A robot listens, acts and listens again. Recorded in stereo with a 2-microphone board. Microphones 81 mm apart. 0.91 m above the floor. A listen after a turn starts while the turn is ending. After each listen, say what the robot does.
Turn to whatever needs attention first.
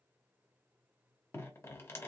Keep listening.
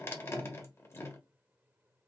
Keep listening.
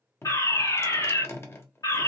Turn 45° left.
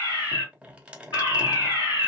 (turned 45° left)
Turn 75° left.
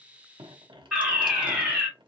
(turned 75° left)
Turn 10° right.
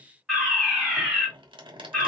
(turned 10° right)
Facing the fire alarm, 2 to 4 m away.